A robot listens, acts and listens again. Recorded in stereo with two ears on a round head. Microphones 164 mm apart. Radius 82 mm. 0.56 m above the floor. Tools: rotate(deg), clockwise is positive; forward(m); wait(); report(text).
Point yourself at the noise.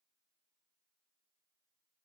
wait()
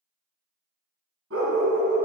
rotate(90)
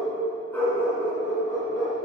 rotate(-20)
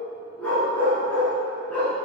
rotate(-10)
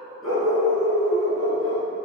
report("Found it: a dog barking, straight ahead.")